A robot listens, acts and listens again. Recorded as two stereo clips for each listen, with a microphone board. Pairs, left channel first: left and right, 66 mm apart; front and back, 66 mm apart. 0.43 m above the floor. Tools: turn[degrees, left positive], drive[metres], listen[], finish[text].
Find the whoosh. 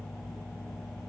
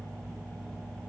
Action: listen[]
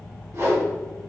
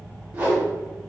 Thought: The whoosh: 120° right.
Action: turn[-120]
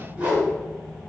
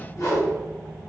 Thought: The whoosh is now 30° right.
Action: turn[-30]
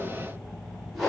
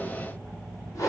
Action: finish[Found it: a whoosh, straight ahead, under 1 m away.]